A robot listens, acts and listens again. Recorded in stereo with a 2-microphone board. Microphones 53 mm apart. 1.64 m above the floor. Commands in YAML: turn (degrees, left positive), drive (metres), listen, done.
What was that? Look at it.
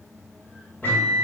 turn: 35
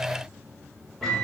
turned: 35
done: "Found it: a microwave, straight ahead, 1 to 2 m away."